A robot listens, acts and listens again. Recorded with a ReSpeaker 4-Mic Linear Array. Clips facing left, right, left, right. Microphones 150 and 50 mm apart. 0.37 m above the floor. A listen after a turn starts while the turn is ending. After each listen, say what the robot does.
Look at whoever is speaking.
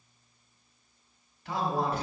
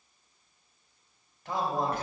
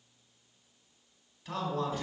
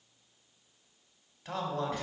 Turn 45° right.
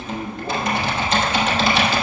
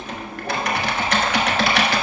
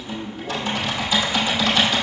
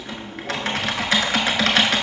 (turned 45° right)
Keep listening.
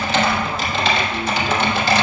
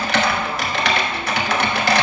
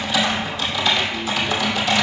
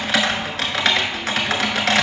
Keep listening.
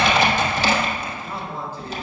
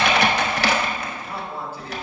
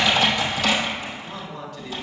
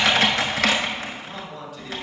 Turn 10° right.
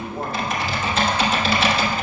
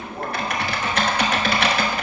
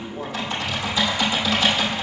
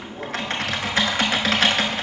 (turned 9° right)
Keep listening.
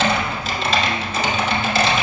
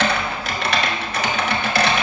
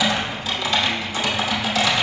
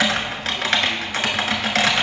Keep listening.
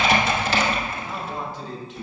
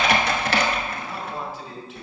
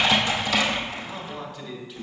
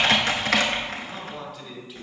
Found it: a man speaking, straight ahead.